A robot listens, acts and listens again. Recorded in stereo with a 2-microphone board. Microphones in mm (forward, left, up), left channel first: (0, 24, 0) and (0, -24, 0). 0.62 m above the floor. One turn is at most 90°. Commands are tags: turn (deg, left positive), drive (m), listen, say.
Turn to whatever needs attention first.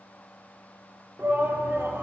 <turn deg="-50"/>
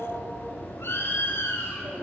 <turn deg="-65"/>
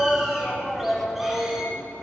<say>Facing the shout.</say>